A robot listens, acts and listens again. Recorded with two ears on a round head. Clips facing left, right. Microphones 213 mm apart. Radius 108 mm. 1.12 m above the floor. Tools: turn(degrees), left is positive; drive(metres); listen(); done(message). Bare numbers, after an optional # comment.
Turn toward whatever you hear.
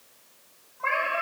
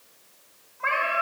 # The cat meowing: about 25° right or 155° right.
turn(-25)
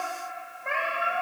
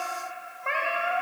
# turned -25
turn(-30)
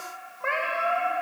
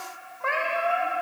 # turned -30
done("Found it: a cat meowing, straight ahead.")